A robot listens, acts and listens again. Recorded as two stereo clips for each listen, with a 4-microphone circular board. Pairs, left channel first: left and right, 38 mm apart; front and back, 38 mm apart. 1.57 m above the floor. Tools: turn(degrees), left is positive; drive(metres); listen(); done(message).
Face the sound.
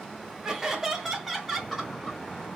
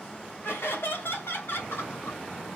done("Found it: laughter, straight ahead.")